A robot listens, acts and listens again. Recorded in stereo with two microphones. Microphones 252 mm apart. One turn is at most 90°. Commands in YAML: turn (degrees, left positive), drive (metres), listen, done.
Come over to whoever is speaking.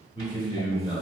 turn: 20
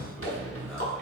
drive: 1.0
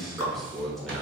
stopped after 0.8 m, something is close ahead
done: "I am next to the man speaking."